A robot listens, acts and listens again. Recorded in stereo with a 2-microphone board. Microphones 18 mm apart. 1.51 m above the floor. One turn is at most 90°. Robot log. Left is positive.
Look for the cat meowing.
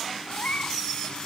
cmd yaw +90
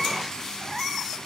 note: So it is at 10° right.
cmd yaw -10
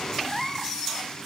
end: Found it: a cat meowing, straight ahead.